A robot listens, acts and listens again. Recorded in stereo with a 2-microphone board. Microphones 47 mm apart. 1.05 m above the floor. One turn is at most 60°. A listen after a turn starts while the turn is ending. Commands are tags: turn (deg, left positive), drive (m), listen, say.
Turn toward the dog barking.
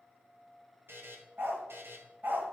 <turn deg="-45"/>
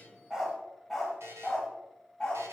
<turn deg="20"/>
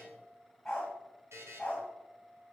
<turn deg="20"/>
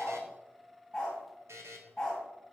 <turn deg="10"/>
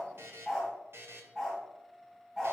<say>Found it: a dog barking, straight ahead, 2 to 4 m away.</say>